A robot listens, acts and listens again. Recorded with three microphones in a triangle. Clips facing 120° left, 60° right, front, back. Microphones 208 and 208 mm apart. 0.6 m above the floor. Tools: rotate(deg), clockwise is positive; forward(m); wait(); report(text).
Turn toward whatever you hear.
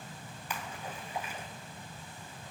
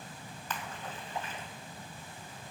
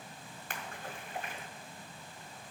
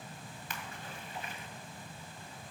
rotate(-40)
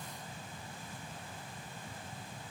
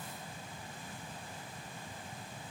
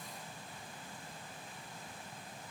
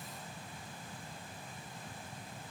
report("Facing where the splash came from. I can't hear it now.")